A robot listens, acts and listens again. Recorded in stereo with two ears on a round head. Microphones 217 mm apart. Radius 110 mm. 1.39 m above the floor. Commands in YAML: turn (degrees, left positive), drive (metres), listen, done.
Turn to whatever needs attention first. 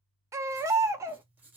turn: -30
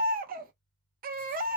turn: -135
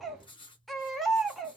done: "Facing the baby crying, under 1 m away."